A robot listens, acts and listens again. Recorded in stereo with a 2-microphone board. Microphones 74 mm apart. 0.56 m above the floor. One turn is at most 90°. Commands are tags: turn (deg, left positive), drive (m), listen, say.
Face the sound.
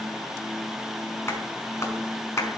<turn deg="40"/>
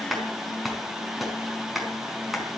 <say>Found it: a clap, straight ahead, over 4 m away.</say>